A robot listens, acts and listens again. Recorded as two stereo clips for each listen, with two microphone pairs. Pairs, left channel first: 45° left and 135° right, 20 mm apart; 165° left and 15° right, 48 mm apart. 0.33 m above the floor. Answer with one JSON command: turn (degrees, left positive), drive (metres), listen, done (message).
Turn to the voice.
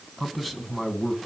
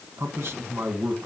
{"turn": -35}
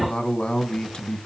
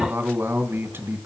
{"turn": 10}
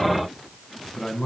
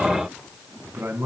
{"done": "Facing the man speaking."}